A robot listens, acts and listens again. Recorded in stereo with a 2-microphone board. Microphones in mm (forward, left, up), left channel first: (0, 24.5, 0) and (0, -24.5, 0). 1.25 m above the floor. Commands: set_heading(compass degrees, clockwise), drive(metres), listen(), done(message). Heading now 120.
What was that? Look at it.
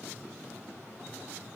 listen()
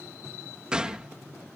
set_heading(135)
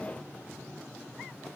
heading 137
listen()
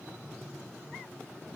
done("I heard a gunshot, but can't make it out now. It was about straight ahead or 145° right.")